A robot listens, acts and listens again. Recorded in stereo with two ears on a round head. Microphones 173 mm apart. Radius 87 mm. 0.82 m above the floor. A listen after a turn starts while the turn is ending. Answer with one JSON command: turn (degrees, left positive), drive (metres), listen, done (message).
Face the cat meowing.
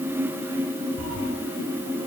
{"turn": -90}
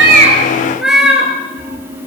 {"done": "Found it: a cat meowing, straight ahead."}